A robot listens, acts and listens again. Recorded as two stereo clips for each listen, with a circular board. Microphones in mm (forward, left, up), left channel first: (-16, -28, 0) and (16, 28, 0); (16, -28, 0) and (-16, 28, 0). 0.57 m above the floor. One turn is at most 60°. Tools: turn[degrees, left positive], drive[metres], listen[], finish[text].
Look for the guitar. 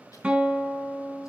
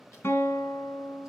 Thought: The guitar: 15° right.
Action: turn[-15]
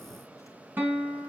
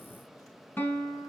Action: finish[Facing the guitar, 2 to 4 m away.]